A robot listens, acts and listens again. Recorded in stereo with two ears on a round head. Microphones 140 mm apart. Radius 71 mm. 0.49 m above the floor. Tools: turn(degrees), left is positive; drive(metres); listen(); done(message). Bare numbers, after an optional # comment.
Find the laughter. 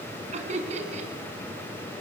# The laughter: about 50° right or 130° right.
turn(-50)
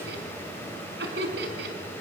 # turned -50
# So it is at 85° right.
turn(-85)
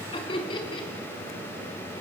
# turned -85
# The laughter is now 35° left.
turn(35)
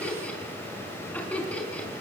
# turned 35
# The laughter is now 10° left.
turn(10)
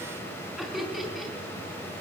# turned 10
done("Facing the laughter, over 4 m away.")